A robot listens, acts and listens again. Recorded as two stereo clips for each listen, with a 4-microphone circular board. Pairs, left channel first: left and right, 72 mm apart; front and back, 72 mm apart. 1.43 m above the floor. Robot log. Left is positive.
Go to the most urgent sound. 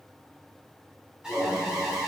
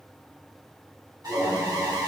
note: The alarm: 170° right.
cmd yaw -170
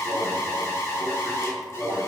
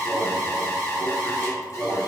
note: The alarm is now 45° left.
cmd yaw +45
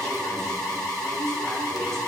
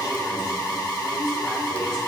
cmd fwd 1.0
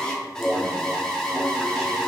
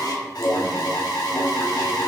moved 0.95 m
note: The alarm is now 10° left.
cmd yaw +10
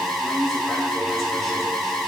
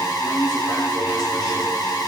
cmd fwd 1.0
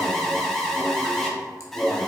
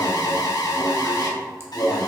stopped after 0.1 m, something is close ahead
end: I am next to the alarm.